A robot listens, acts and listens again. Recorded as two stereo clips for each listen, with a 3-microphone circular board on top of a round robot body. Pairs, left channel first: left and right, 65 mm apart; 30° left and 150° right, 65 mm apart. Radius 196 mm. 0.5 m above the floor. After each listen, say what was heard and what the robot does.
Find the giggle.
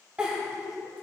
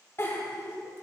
The giggle: 20° right. Turn 20° right.
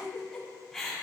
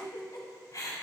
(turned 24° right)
Found it: a giggle, straight ahead.